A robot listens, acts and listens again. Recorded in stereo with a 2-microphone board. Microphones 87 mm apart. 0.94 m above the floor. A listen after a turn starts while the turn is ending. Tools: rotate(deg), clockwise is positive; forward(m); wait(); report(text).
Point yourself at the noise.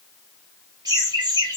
rotate(55)
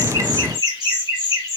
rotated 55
rotate(40)
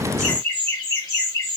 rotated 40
rotate(-35)
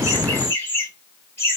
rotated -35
rotate(-25)
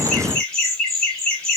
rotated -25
rotate(-10)
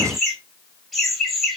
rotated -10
report("Found it: laughter, straight ahead.")